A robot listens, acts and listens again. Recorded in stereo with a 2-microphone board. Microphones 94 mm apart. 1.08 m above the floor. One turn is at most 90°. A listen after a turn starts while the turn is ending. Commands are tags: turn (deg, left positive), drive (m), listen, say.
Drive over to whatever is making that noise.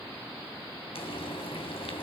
<turn deg="75"/>
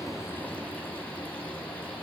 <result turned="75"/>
<turn deg="15"/>
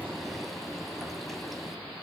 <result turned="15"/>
<drive m="1.0"/>
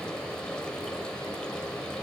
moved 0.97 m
<turn deg="10"/>
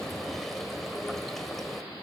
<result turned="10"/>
<drive m="1.0"/>
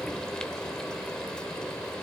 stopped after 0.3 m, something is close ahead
<turn deg="10"/>
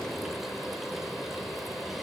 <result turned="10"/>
<say>I am next to the frying.</say>